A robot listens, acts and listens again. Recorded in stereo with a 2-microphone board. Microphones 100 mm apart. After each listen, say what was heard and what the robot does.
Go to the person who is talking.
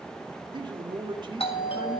The man speaking: about 50° right or 130° right. Turn 50° right.
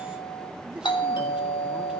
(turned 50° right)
Keep listening.
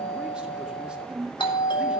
So it is at 10° right. Turn 10° right.
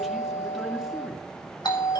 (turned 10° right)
Keep listening.
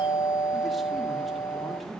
Keep listening.
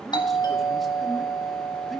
Facing where the man speaking came from. I can't hear it now. I did not reach it.